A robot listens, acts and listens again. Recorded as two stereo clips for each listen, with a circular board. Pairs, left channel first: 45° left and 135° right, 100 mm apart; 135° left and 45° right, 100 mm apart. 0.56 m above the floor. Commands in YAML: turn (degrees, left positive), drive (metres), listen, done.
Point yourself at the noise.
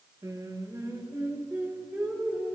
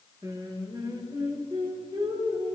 turn: -60
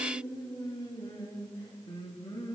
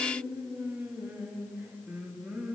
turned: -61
turn: 30
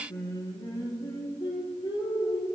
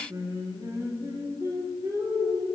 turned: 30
done: "Found it: singing, straight ahead."